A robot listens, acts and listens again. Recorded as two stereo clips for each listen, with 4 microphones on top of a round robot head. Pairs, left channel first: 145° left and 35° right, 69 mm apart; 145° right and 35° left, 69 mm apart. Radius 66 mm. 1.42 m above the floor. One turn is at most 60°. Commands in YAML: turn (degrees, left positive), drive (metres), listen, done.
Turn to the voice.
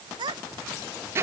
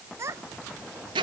turn: -20
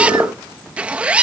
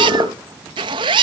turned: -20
listen: true
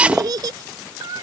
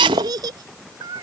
done: "Facing the child speaking."